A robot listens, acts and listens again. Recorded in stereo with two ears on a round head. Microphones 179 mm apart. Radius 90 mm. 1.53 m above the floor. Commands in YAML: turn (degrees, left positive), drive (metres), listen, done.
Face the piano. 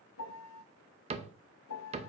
turn: 90
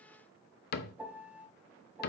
turn: -10
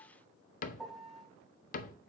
done: "Facing the piano, under 1 m away."